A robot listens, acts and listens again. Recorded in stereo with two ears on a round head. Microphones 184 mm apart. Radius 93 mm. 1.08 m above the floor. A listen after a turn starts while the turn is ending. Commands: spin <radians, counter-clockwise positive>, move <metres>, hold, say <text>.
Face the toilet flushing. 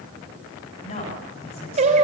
hold
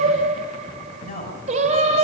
hold
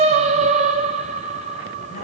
say I can't make out a toilet flushing, only singing and a woman speaking.